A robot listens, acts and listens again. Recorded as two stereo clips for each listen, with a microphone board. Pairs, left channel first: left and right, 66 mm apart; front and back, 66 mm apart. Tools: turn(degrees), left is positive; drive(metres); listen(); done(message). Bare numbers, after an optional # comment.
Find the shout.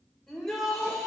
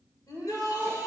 done("Facing the shout.")